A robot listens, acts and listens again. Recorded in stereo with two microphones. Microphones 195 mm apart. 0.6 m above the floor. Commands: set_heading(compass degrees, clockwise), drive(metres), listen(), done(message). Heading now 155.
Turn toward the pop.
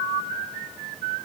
listen()
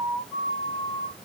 listen()
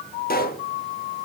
set_heading(105)
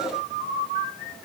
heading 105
listen()
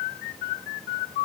done("I heard a pop, but can't make it out now. It was about straight ahead or 80° left.")